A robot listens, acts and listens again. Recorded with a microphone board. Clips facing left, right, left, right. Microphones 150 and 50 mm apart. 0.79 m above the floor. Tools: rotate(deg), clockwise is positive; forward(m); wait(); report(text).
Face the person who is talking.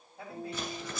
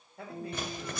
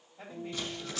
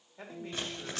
rotate(70)
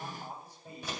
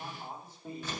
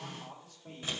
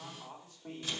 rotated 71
rotate(30)
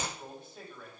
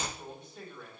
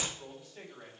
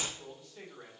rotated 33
report("Found it: a man speaking, straight ahead, 2 to 4 m away.")